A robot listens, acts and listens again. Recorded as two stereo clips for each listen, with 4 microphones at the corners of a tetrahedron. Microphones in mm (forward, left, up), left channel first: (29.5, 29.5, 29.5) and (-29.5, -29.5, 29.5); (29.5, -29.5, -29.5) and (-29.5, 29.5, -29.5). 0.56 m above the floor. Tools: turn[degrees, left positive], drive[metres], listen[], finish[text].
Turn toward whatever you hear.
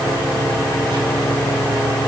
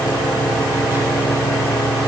Action: listen[]
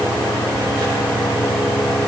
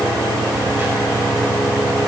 Action: listen[]
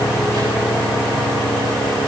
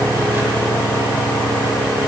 Action: finish[I can't make out anything.]